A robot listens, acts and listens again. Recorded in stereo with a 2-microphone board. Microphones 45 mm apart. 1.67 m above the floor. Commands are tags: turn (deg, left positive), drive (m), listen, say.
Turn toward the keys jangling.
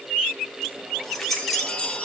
<turn deg="30"/>
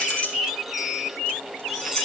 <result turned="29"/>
<turn deg="20"/>
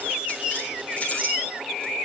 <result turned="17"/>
<listen/>
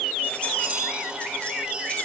<listen/>
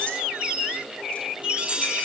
<say>I heard keys jangling, but can't make it out now. It was about 5° left or 145° left.</say>